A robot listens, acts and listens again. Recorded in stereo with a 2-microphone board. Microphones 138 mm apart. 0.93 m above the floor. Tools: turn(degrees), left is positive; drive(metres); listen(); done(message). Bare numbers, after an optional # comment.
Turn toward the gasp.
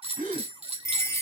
turn(-90)
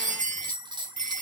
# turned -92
done("I heard a gasp from this way, but can't make it out now.")